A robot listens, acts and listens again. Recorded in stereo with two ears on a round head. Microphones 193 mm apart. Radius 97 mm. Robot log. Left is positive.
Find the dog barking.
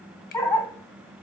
cmd yaw +30
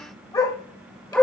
cmd yaw +30
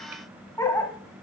cmd yaw +30
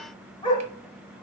note: The dog barking: about 20° left or 160° left.
cmd yaw +20
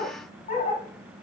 note: So it is at 150° left.
cmd yaw +150
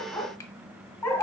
note: The dog barking is now 15° left.
cmd yaw +15
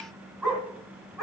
end: Found it: a dog barking, straight ahead.